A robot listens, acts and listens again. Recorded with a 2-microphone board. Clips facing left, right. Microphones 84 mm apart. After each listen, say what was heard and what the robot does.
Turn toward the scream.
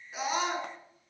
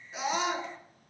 Turn 30° left.
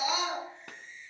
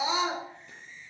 So it is at 30° right. Turn 30° right.
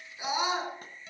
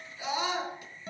The scream is now 15° left. Turn 15° left.
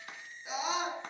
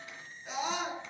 Facing the scream, over 4 m away.